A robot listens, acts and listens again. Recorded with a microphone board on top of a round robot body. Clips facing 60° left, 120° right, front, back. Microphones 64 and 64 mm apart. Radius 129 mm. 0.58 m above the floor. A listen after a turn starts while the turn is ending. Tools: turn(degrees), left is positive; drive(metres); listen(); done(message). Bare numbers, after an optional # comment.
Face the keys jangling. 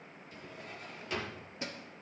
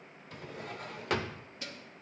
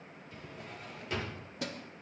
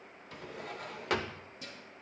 done("Found it: keys jangling, straight ahead, under 1 m away.")